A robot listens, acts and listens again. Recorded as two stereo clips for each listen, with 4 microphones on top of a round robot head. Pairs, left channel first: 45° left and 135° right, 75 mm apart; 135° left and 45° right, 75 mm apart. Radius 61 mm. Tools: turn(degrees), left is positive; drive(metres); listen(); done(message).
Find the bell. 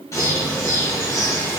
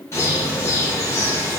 listen()
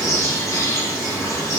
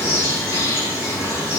listen()
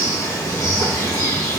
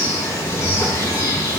done("I can't make out a bell, only a bird.")